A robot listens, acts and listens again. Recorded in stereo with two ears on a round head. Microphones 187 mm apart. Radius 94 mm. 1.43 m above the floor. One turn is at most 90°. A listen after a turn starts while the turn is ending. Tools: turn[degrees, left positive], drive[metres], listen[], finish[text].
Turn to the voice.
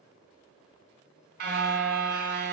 Action: listen[]
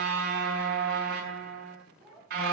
Action: turn[30]
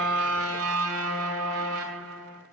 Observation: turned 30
Action: listen[]
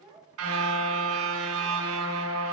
Thought: So it is at 25° right.
Action: turn[-25]
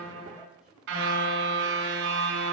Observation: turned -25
Action: listen[]
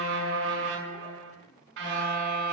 Action: listen[]
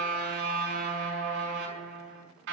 Action: finish[I heard a child speaking from this way, but can't make it out now.]